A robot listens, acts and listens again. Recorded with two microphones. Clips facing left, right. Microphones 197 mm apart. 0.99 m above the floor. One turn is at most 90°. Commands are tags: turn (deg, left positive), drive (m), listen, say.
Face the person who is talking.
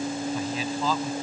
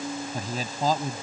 <turn deg="-45"/>
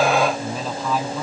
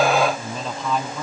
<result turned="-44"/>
<say>Facing the man speaking.</say>